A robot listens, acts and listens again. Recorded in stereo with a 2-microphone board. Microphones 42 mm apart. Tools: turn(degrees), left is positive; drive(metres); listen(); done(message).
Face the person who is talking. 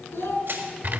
turn(degrees=70)
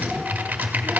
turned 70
listen()
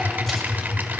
listen()
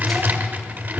done("I heard a child speaking, but can't make it out now. It was about straight ahead or 40° left.")